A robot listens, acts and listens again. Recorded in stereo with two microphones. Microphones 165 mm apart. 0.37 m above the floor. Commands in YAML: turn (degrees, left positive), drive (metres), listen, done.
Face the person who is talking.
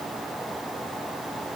listen: true
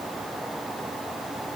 listen: true
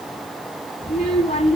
turn: 40
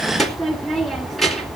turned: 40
done: "Facing the child speaking, 2 to 4 m away."